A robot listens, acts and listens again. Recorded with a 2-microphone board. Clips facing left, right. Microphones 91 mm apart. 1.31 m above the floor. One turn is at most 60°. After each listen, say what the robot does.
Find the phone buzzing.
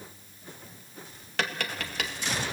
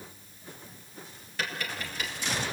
Keep listening.
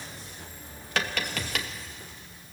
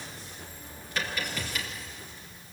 Keep listening.
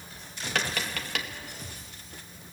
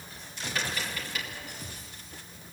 I can't make out a phone buzzing to turn to.